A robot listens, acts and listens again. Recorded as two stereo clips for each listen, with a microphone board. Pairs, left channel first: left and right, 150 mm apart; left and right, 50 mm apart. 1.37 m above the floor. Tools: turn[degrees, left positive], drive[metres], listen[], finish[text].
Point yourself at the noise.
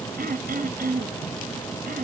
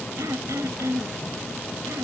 Action: turn[-90]
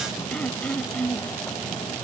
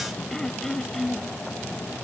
Action: finish[Facing the throat clearing.]